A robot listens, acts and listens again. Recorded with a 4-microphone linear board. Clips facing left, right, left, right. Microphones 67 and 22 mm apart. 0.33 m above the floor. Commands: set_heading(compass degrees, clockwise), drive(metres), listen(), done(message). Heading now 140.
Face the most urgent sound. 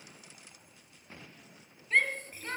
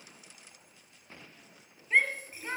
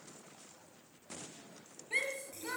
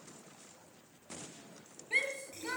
set_heading(170)
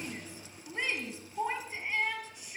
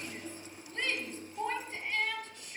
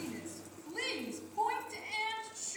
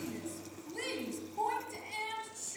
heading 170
set_heading(150)
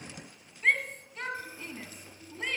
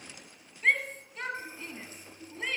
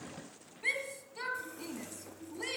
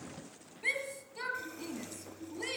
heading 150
done("Facing the shout.")